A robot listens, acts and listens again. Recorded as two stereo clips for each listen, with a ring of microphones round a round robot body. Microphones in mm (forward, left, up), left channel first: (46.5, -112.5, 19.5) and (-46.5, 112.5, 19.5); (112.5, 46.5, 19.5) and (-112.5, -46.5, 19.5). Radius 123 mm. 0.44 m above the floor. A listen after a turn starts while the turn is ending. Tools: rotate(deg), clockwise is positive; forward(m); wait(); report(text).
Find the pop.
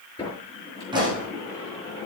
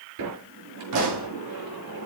rotate(175)
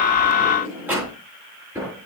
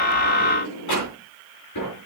report("Facing where the pop came from. I can't hear it now.")